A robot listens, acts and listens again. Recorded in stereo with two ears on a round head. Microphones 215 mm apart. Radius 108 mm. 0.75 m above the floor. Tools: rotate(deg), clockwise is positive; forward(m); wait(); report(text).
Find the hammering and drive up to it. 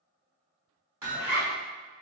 rotate(30)
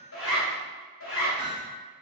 rotate(-15)
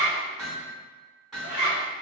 forward(1.0)
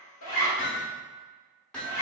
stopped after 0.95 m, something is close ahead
report("I am next to the hammering.")